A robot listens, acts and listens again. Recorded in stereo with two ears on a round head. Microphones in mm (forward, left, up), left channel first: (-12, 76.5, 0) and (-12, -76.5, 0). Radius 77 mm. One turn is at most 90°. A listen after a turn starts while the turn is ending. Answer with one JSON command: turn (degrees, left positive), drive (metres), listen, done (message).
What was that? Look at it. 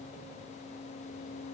{"listen": true}
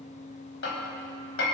{"turn": 90}
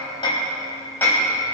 {"turn": 10}
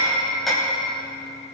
{"done": "Facing the hammering."}